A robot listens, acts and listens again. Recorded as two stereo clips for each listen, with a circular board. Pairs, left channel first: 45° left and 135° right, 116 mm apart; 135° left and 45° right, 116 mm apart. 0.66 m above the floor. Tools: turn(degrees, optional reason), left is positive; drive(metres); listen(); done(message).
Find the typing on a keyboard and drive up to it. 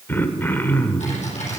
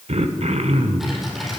turn(degrees=45, reason="The typing on a keyboard: 45° left.")
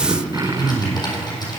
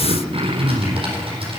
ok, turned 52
drive(metres=1.0)
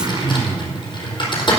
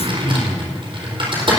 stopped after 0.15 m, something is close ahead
done("Blocked. The typing on a keyboard is further on, straight ahead.")